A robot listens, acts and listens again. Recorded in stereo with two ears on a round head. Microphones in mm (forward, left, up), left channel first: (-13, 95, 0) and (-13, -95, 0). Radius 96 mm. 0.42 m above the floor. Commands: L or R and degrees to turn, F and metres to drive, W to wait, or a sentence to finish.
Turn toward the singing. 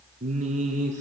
R35
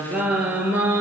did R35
R10
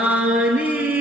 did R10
R10
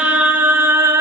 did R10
R15
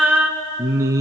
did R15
R15
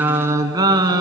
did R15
R20
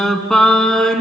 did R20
Found it: singing, straight ahead, 1 to 2 m away.